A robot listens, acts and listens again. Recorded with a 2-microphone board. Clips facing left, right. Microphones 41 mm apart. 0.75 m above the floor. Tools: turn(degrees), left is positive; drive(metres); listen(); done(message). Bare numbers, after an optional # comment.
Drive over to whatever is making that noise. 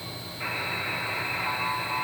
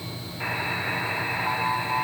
# The buzzer: about 40° right or 140° right.
turn(-40)
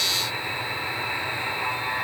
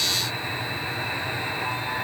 drive(1.0)
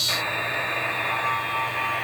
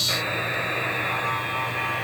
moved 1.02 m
drive(1.0)
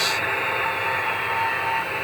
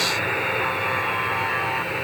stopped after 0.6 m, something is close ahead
done("Arrived at the buzzer, straight ahead.")